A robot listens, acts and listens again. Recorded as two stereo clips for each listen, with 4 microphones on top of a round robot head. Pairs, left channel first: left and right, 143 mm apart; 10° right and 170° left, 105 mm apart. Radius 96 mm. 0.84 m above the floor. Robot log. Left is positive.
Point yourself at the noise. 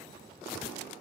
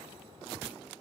cmd idle
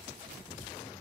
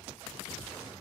cmd idle
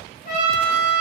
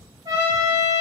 note: The trumpet: 120° left.
cmd yaw +120
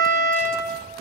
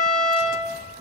end: Found it: a trumpet, straight ahead.